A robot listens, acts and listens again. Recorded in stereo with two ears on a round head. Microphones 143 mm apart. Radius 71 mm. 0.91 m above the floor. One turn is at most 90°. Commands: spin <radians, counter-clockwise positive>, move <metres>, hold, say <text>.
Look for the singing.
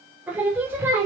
spin -0.26
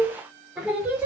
spin -0.52
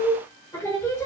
spin 0.26
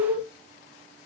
say Found it: singing, straight ahead.